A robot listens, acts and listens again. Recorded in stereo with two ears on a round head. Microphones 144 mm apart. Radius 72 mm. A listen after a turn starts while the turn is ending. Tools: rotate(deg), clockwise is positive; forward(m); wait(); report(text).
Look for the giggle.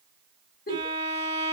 rotate(-60)
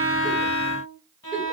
wait()
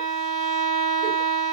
wait()
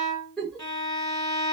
report("Found it: a giggle, straight ahead, 1 to 2 m away.")